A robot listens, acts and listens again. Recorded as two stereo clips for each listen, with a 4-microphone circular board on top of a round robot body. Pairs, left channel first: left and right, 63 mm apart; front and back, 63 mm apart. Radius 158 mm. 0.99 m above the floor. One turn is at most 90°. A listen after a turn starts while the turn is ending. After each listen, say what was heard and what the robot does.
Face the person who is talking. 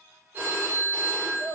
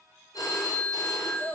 The child speaking: 55° right. Turn 55° right.
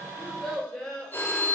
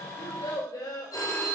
The child speaking is now 10° left. Turn 10° left.
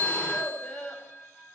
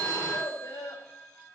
The child speaking is now 10° left. Turn 10° left.
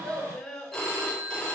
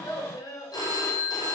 The child speaking is now 10° left. Turn 10° left.
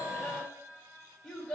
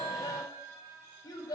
Found it: a child speaking, straight ahead.